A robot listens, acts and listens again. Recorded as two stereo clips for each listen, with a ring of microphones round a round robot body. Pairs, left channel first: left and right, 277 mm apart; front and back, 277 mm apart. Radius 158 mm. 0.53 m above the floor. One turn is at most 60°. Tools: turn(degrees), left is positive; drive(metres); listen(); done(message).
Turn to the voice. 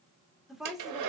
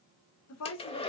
done("Facing the woman speaking.")